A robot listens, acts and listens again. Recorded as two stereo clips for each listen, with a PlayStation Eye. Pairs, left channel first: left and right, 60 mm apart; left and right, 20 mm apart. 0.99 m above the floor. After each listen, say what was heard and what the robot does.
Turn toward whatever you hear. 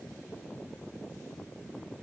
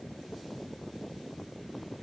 Keep listening.
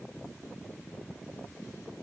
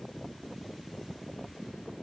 Keep listening.
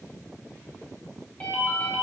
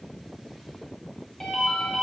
The ringtone: about 20° left or 160° left. Turn 20° left.
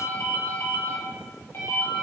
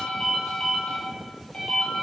So it is at 140° left. Turn 140° left.
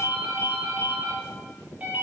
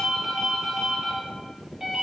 The ringtone is now 25° right. Turn 25° right.
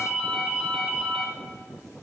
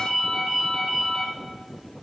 Facing the ringtone, under 1 m away.